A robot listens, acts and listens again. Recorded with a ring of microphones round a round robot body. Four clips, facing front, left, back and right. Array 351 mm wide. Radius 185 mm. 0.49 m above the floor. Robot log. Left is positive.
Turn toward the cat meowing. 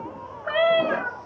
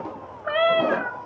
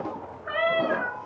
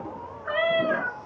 note: The cat meowing: 55° left.
cmd yaw +55
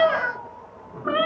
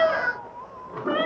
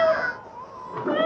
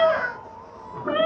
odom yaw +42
note: The cat meowing is now 10° right.
cmd yaw -10
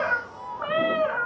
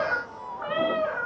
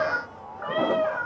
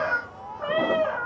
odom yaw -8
end: Facing the cat meowing, 2 to 4 m away.